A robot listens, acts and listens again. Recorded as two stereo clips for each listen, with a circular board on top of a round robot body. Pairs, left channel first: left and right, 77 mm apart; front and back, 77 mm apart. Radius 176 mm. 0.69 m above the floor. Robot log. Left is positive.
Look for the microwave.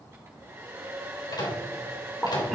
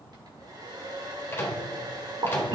note: The microwave: 65° left.
cmd yaw +65
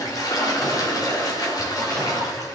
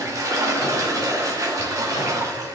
cmd idle
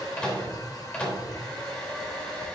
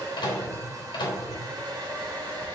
note: The microwave is now 20° left.
cmd yaw +20
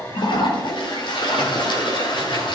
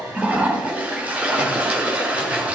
cmd idle
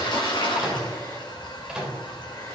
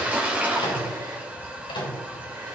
end: Found it: a microwave, straight ahead.